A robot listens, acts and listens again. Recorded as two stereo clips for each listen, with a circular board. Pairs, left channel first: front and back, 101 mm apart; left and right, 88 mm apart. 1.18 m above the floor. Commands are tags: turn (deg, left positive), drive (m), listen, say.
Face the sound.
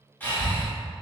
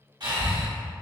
<turn deg="-70"/>
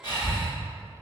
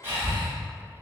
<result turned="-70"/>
<turn deg="-25"/>
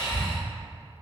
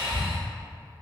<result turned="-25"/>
<turn deg="-10"/>
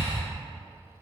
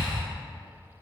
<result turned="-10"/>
<say>Facing the breathing.</say>